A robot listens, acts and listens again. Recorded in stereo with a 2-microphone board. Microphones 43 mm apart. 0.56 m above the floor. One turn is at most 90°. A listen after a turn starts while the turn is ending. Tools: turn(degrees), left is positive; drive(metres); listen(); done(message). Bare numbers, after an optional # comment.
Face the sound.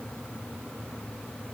listen()
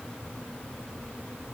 listen()
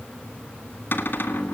# The cupboard door: about 50° left or 130° left.
turn(50)
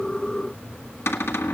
# So it is at 80° left.
turn(80)
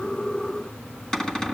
# The cupboard door is now 15° left.
turn(15)
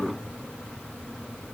listen()
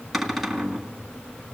done("Facing the cupboard door, 1 to 2 m away.")